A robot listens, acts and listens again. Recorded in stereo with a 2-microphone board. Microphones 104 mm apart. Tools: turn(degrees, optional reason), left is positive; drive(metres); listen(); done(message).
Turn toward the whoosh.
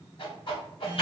turn(degrees=55, reason="The whoosh: about 55° left or 125° left.")
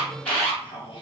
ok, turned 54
turn(degrees=60, reason="So it is at 60° left.")
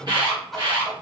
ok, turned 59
done("Facing the whoosh, under 1 m away.")